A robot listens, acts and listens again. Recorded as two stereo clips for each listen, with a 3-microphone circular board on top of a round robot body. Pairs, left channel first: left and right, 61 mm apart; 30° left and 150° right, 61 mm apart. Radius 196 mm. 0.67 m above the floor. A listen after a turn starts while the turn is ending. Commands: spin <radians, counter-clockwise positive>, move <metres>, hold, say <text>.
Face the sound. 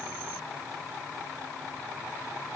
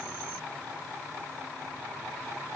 hold
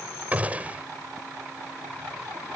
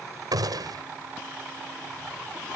spin -2.79
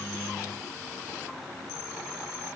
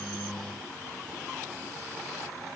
say I heard a gunshot from this way, but can't make it out now.